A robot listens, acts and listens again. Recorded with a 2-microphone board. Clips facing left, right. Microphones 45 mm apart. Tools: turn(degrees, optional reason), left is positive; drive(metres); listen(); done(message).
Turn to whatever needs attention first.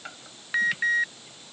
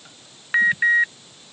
turn(degrees=-30, reason="The alarm: about 30° right or 150° right.")
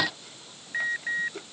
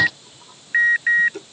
turn(degrees=-120, reason="So it is at 120° right.")
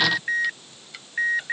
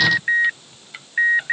turn(degrees=-25, reason="The alarm is now 25° right.")
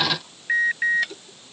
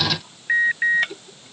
turn(degrees=-10, reason="The alarm is now 10° right.")
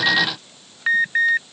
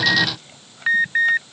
done("Facing the alarm.")